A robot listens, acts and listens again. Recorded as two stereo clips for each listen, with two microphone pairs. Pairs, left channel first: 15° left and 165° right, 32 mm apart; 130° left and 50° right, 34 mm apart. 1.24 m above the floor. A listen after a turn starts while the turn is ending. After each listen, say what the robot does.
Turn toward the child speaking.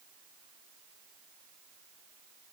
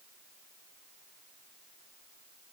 Keep listening.
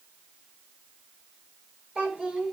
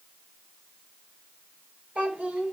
Turn 100° right.
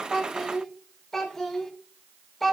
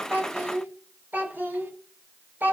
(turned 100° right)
Turn 65° right.
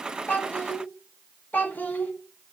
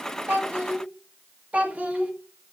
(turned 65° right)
Turn 10° right.
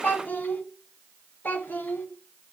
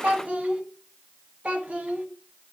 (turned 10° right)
Found it: a child speaking, straight ahead, 1 to 2 m away.